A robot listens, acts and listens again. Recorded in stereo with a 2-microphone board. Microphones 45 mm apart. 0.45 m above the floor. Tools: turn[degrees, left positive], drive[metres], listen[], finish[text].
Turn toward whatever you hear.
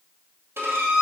Thought: The violin: about 60° right or 120° right.
Action: turn[-60]
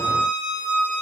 Thought: So it is at 30° right.
Action: turn[-30]
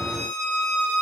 Action: finish[Facing the violin.]